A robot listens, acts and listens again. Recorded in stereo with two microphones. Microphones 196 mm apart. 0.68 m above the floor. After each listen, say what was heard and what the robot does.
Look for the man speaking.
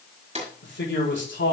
The man speaking: about 75° left or 105° left. Turn 75° left.
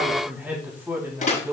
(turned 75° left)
So it is at 15° right. Turn 15° right.
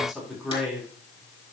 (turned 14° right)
Facing the man speaking, over 4 m away.